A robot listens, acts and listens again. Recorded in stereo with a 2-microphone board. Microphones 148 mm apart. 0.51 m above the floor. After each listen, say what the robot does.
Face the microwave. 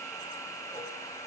Keep listening.
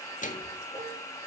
Turn 60° left.
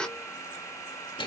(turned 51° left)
Turn 40° left.
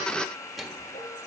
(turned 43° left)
Found it: a microwave, straight ahead.